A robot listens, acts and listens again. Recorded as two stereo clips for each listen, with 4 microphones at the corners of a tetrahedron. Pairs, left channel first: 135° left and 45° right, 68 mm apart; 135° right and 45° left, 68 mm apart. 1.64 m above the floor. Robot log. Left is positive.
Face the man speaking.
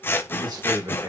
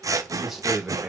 note: The man speaking: 40° right.
cmd yaw -40
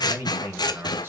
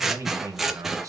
note: The man speaking is now 10° left.
cmd yaw +10
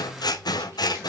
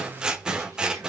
cmd idle
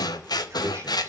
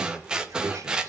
cmd idle
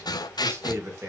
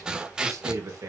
end: Facing the man speaking, 2 to 4 m away.